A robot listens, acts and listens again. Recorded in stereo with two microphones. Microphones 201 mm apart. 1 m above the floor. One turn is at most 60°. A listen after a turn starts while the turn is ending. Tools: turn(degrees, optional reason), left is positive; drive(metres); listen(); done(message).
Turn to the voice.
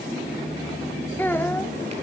turn(degrees=30)
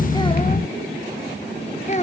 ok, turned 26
turn(degrees=60, reason="So it is at 145° left.")
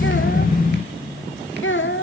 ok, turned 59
turn(degrees=60, reason="The child speaking is now 85° left.")
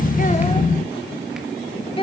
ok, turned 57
turn(degrees=25, reason="The child speaking is now 25° left.")
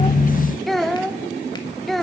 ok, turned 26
done("Found it: a child speaking, straight ahead, 1 to 2 m away.")